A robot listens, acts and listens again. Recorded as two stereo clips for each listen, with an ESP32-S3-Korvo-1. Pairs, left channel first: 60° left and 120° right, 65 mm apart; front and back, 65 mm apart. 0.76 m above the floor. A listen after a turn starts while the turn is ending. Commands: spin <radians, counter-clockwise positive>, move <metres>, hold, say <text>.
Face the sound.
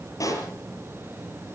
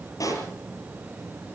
spin 0.52
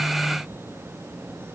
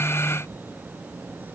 say I heard a pop from this way, but can't make it out now.